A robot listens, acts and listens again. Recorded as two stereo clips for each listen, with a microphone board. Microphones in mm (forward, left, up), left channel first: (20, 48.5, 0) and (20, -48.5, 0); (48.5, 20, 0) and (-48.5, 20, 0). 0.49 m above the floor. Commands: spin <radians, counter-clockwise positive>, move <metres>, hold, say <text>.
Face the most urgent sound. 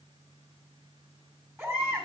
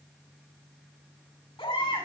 spin -0.44
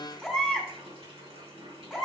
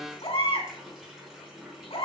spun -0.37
say Facing the baby crying, 2 to 4 m away.